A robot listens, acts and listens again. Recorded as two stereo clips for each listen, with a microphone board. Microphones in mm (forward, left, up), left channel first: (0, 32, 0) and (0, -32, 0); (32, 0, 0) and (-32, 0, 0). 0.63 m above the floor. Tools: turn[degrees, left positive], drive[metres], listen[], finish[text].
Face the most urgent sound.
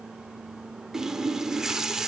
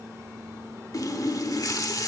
Action: listen[]
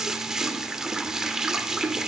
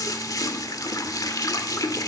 Action: listen[]
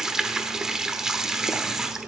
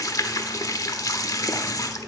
Action: finish[I can't make out anything urgent to turn to.]